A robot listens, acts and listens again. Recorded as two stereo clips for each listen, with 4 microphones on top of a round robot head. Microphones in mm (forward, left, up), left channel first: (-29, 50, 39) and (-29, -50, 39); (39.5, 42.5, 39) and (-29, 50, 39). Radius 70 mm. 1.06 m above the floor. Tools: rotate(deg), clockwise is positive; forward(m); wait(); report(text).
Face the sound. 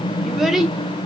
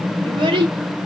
rotate(175)
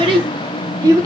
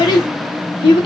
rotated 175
rotate(30)
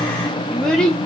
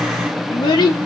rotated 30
rotate(-10)
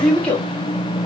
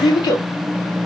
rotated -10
rotate(-10)
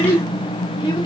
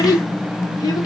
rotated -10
rotate(-20)
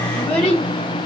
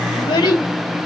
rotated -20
report("Facing the child speaking.")